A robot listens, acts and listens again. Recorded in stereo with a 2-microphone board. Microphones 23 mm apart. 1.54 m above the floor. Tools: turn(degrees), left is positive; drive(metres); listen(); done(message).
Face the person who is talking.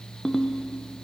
listen()
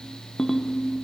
listen()
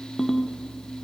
done("I can't make out anyone speaking, only a ringtone.")